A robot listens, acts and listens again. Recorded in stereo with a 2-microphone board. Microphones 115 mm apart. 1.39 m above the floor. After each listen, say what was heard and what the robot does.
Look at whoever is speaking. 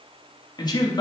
The man speaking: about 35° left or 145° left. Turn 35° left.
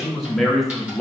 Found it: a man speaking, straight ahead.